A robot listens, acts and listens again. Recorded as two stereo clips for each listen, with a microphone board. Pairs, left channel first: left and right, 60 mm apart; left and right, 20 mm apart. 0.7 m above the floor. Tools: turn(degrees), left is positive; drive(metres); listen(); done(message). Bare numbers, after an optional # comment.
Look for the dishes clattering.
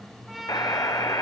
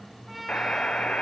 listen()
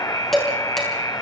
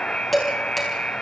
turn(30)
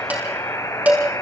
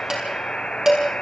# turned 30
# So it is at 30° right.
turn(-30)
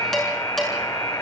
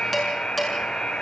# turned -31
done("Found it: dishes clattering, straight ahead, over 4 m away.")